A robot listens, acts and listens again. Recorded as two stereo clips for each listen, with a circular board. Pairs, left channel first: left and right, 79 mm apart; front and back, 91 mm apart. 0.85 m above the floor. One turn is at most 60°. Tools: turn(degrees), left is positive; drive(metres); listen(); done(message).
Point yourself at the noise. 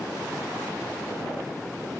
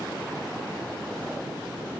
listen()
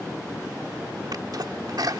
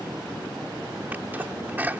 turn(degrees=-60)
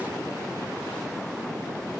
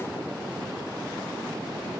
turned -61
turn(degrees=-50)
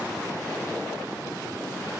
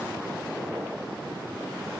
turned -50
done("Facing where the sneeze came from. I can't hear it now.")